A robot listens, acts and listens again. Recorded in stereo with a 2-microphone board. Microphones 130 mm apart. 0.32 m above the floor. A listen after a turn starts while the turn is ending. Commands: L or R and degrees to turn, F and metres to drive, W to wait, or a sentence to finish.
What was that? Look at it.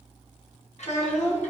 L65
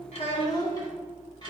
L35
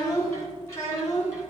L25
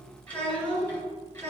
L15
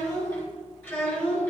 Found it: a child speaking, straight ahead.